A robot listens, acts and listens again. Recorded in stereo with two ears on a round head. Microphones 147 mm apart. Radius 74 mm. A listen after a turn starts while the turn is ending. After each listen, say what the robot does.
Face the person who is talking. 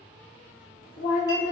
Turn 55° left.
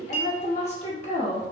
Turn 50° left.
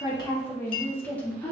Turn 10° left.
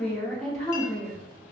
Facing the woman speaking.